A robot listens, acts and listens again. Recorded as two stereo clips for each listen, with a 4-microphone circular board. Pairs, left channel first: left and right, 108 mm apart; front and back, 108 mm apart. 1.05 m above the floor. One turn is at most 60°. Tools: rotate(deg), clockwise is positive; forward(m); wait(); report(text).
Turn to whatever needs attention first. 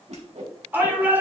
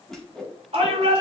rotate(60)
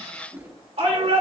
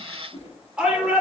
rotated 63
rotate(60)
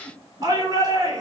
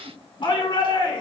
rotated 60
rotate(40)
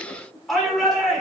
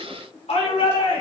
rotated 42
report("Facing the shout, 2 to 4 m away.")